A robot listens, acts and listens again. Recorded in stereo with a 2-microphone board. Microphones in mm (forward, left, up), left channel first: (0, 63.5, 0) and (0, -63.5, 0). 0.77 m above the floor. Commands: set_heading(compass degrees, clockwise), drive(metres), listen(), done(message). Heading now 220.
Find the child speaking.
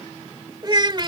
set_heading(260)
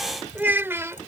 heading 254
set_heading(274)
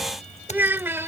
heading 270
set_heading(290)
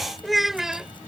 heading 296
done("Found it: a child speaking, straight ahead.")